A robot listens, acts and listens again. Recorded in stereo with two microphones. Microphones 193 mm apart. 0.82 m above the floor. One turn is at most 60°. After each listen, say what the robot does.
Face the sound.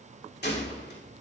Turn 60° left.
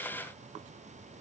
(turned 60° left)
Keep listening.
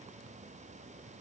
I heard a gunshot, but can't make it out now. It was about straight ahead or 60° left.